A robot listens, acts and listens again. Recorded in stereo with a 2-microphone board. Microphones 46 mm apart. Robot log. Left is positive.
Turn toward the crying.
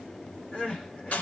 note: The crying: about 25° left or 155° left.
cmd yaw +25
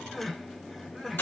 end: Found it: crying, straight ahead.